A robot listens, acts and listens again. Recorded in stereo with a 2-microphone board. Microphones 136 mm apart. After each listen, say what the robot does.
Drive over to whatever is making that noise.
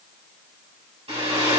Turn 50° right.
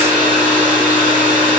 Turn 80° right.
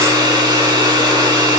Turn 30° right.
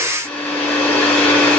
Turn 15° left.
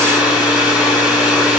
Drive 1.0 m forward.
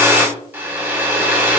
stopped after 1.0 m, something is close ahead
Turn 10° right.
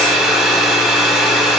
I am next to the hair dryer.